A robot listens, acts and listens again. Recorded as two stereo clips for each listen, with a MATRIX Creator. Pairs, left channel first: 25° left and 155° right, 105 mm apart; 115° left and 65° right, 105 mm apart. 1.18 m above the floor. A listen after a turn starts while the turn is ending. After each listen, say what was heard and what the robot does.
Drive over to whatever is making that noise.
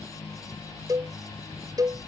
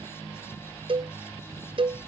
The cowbell: 105° right. Turn 105° right.
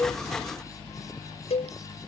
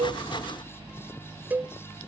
Drive 1.0 m forward.
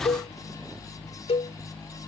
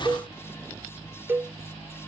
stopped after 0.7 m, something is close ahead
Something is in my way. I am facing the cowbell but have not reached it.